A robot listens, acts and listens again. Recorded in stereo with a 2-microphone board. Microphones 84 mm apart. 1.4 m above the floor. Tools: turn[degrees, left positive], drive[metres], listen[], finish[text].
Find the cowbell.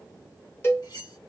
Thought: The cowbell: about 30° left or 150° left.
Action: turn[30]
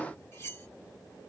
Action: listen[]
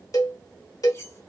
Thought: So it is at 115° left.
Action: turn[115]
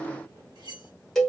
Action: finish[Found it: a cowbell, straight ahead, 1 to 2 m away.]